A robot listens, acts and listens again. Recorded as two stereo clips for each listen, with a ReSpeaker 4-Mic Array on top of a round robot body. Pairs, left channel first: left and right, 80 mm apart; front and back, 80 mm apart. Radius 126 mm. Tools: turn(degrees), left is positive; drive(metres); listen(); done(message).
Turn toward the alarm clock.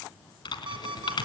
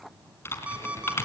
turn(degrees=-105)
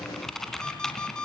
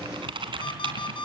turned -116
turn(degrees=10)
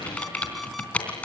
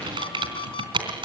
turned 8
listen()
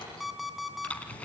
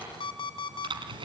done("Facing the alarm clock.")